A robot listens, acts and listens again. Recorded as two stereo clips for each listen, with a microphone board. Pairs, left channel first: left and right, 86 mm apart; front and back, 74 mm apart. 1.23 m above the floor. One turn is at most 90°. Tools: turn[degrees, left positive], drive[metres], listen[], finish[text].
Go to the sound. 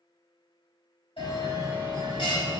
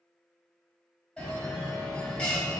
Thought: The bell: 80° left.
Action: turn[80]
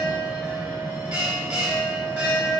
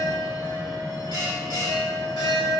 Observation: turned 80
Thought: The bell is now 15° right.
Action: turn[-15]
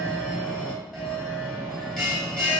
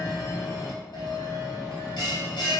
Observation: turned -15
Action: drive[1.0]
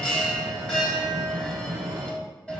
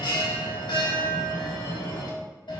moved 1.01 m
Action: drive[1.0]
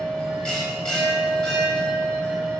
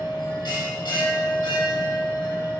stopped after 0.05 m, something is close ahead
Action: finish[I am next to the bell.]